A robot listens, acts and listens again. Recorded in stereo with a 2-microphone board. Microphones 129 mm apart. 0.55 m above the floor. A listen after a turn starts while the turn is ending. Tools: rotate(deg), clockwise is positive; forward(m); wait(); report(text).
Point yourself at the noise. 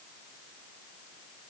wait()
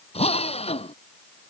rotate(-50)
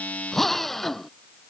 report("Facing the drill.")